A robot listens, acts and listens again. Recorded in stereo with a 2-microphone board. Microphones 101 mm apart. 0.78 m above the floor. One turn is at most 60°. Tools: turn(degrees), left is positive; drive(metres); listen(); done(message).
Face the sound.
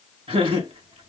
turn(degrees=-60)
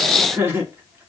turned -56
turn(degrees=-25)
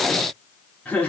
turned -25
turn(degrees=15)
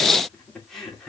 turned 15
done("Facing the laughter, 2 to 4 m away.")